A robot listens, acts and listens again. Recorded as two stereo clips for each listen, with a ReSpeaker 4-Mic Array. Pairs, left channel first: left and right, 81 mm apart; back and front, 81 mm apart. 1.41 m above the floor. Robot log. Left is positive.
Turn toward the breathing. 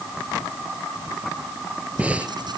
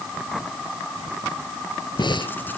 note: The breathing: 165° right.
cmd yaw -165
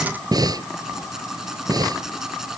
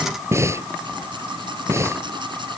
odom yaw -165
note: The breathing is now 55° right.
cmd yaw -55
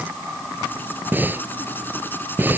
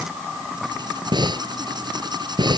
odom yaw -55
note: The breathing is now 25° right.
cmd yaw -25
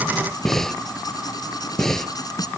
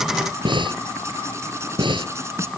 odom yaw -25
end: Facing the breathing.